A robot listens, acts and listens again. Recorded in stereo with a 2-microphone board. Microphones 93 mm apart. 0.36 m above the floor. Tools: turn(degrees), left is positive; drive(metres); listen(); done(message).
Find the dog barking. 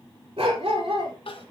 turn(degrees=-90)
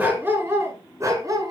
turn(degrees=-40)
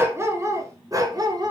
turn(degrees=-45)
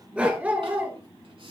turn(degrees=-20)
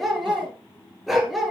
done("Facing the dog barking, 2 to 4 m away.")